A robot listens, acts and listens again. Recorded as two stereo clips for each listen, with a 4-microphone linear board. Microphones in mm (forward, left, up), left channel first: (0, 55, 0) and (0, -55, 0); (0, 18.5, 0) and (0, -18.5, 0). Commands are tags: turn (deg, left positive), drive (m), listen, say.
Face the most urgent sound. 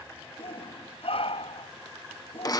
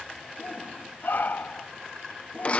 <turn deg="60"/>
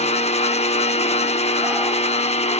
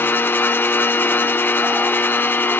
<listen/>
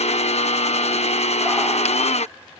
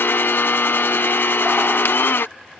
<listen/>
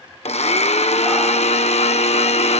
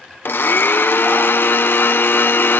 <say>I heard a shout, but can't make it out now. It was about straight ahead or 60° left.</say>